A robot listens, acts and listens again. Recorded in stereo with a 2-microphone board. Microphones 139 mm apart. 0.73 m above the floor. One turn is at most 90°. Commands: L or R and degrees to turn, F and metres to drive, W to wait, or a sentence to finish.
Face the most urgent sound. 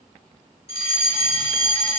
L45
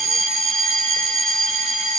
Found it: a fire alarm, straight ahead.